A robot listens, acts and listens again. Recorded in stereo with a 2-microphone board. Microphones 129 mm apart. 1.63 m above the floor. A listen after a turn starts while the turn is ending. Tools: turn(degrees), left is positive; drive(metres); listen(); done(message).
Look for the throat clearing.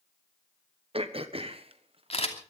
turn(degrees=-50)
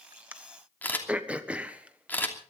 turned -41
turn(degrees=-10)
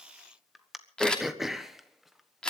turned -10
done("Facing the throat clearing, 1 to 2 m away.")